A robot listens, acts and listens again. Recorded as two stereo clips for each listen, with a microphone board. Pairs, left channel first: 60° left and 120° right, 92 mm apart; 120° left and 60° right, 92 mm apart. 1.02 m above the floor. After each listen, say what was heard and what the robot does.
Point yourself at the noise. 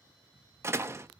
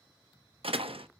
The door slam: 60° right. Turn 60° right.
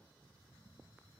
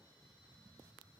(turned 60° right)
Facing where the door slam came from. I can't hear it now.